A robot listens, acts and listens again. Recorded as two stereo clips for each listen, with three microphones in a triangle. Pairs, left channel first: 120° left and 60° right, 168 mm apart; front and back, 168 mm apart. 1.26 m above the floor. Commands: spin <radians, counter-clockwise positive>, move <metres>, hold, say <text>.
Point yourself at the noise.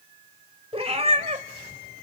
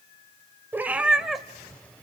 spin -1.57
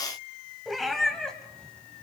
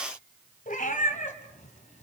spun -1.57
spin 0.61
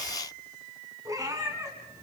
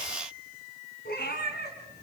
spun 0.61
spin 0.17
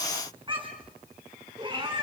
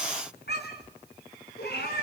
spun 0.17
say Facing the cat meowing.